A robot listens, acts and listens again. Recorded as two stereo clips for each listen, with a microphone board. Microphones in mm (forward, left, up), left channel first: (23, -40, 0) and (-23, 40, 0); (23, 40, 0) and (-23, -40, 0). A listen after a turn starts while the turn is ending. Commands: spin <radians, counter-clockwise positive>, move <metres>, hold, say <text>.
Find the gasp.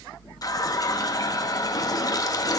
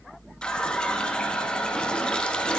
hold
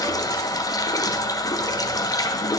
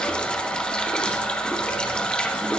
hold
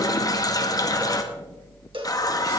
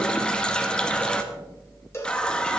say I can't make out a gasp to turn to.